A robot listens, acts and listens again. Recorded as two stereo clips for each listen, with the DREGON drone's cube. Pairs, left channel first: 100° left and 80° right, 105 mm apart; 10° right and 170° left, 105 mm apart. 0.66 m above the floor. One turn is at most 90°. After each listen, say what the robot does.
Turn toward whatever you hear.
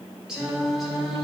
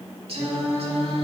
Turn 90° right.
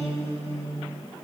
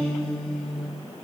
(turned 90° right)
Turn 90° right.
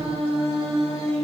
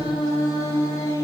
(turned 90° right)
Turn 70° right.
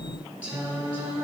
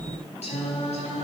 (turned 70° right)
Turn 10° right.
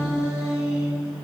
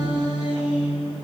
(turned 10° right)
Found it: singing, straight ahead.